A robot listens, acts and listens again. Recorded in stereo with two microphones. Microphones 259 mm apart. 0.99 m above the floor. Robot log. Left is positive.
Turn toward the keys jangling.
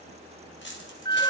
note: The keys jangling: about 45° left or 135° left.
cmd yaw +45
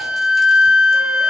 cmd idle
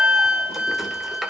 cmd idle
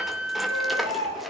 end: I heard keys jangling, but can't make it out now. It was about straight ahead or 90° left.